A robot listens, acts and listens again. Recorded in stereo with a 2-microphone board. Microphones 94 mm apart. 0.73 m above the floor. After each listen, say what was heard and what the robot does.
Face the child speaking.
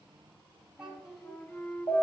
Turn 30° right.
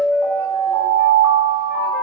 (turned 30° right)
Keep listening.
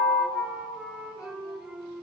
Keep listening.
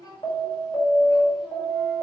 So it is at 40° left. Turn 40° left.
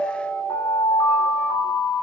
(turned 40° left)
Keep listening.
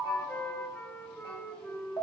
Keep listening.
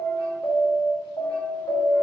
I heard a child speaking from this way, but can't make it out now.